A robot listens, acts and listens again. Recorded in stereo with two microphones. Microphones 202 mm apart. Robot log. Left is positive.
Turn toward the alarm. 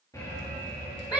note: The alarm: about 15° left or 165° left.
cmd yaw +15
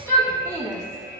note: So it is at 155° left.
cmd yaw +155
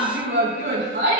cmd idle
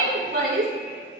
note: The alarm is now 50° left.
cmd yaw +50
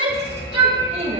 note: The alarm is now 25° left.
cmd yaw +25
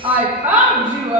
end: Facing the alarm.